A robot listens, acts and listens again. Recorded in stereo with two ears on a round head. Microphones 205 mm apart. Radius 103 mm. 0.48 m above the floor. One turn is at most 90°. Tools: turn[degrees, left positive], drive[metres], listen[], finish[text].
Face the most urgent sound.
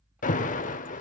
Thought: The alarm: about 40° left or 140° left.
Action: turn[40]
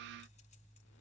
Action: listen[]
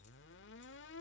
Action: listen[]
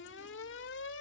Thought: So it is at 95° left.
Action: turn[90]
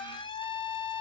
Thought: The alarm is now 25° left.
Action: turn[25]
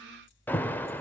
Thought: The alarm is now 10° left.
Action: turn[10]
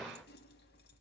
Action: finish[Facing the alarm, 1 to 2 m away.]